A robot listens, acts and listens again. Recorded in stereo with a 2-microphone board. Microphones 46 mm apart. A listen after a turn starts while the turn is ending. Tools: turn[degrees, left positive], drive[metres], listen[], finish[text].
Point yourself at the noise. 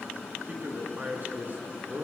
Thought: The man speaking: about 40° right or 140° right.
Action: turn[-40]
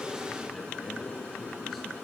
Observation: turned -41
Action: listen[]
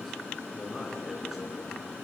Action: finish[Found it: a man speaking, straight ahead, over 4 m away.]